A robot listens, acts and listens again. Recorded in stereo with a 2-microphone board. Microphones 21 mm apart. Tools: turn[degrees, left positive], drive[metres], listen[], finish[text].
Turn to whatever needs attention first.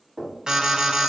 Thought: The alarm: about 35° right or 145° right.
Action: turn[-35]
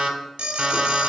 Thought: So it is at 100° right.
Action: turn[-100]
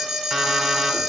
Thought: The alarm is now 25° right.
Action: turn[-25]
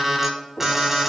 Thought: The alarm is now 15° right.
Action: turn[-15]
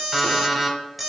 Action: finish[Found it: an alarm, straight ahead.]